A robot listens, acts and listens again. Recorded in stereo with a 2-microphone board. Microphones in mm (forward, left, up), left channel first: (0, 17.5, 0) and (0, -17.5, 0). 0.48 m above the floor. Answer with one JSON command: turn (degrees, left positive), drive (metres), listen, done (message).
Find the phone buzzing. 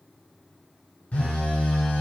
{"turn": 40}
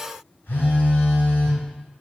{"turn": 100}
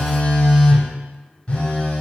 {"turn": 30}
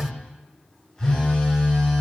{"turn": 15}
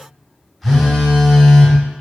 {"done": "Found it: a phone buzzing, straight ahead, under 1 m away."}